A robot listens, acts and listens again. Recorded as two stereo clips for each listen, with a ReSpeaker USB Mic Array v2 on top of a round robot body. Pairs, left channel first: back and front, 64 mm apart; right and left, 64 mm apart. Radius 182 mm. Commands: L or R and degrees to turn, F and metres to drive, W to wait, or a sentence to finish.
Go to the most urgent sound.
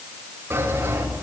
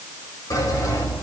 W
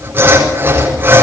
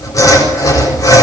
W
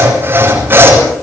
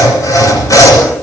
I can't make out anything urgent, only sawing.